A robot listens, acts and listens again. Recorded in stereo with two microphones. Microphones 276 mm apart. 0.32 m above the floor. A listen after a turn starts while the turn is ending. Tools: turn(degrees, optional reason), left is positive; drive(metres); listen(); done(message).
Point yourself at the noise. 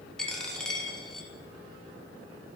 turn(degrees=30)
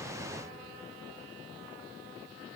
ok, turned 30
listen()
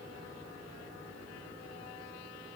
done("I heard a dropped coin, but can't make it out now. It was about 30° right or 150° left.")